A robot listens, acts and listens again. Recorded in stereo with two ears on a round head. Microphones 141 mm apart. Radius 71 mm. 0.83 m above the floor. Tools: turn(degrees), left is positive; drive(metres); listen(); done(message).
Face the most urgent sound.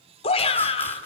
turn(degrees=40)
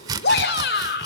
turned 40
turn(degrees=100)
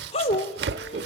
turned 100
turn(degrees=40)
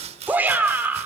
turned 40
turn(degrees=-10)
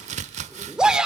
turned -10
done("Facing the shout.")